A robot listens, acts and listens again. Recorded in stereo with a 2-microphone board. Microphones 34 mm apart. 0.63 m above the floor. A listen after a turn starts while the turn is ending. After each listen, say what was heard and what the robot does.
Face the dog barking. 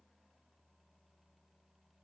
Keep listening.
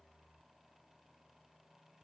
Keep listening.
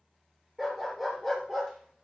Turn 30° right.
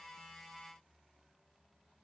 Keep listening.
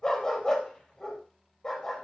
So it is at 20° left. Turn 20° left.
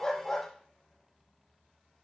Facing the dog barking, over 4 m away.